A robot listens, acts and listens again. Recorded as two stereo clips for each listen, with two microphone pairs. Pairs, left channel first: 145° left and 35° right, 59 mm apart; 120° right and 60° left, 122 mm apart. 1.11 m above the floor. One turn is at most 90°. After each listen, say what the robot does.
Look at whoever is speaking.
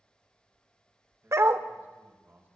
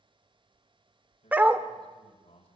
Turn 85° right.
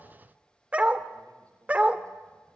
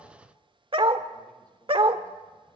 Keep listening.
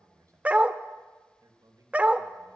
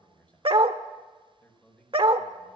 Turn 40° right.
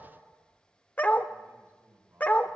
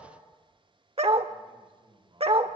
Turn 20° left.
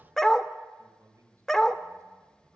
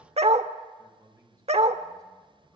Facing the man speaking, over 4 m away.